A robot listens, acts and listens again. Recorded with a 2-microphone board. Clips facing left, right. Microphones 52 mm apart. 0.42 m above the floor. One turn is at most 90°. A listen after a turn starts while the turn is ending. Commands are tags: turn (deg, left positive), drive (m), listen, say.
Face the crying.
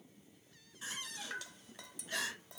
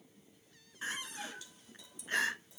<turn deg="-40"/>
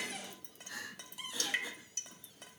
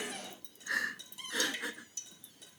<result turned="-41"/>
<turn deg="-90"/>
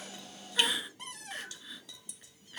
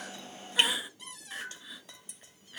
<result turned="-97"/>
<say>Facing the crying, 1 to 2 m away.</say>